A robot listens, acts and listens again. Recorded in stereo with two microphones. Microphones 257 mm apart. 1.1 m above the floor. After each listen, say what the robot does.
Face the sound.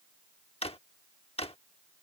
Turn 25° left.
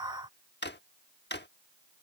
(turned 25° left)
Turn 130° left.
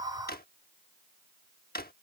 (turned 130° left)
Turn 45° left.
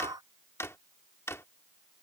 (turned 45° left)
Turn 10° left.
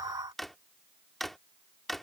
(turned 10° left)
Found it: a drawer, straight ahead.